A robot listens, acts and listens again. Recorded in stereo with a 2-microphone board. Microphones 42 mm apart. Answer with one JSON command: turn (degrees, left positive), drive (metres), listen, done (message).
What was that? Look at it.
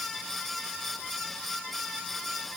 {"listen": true}
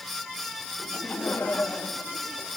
{"turn": 50}
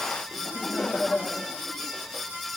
{"turn": 10}
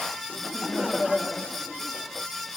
{"done": "Facing the laughter."}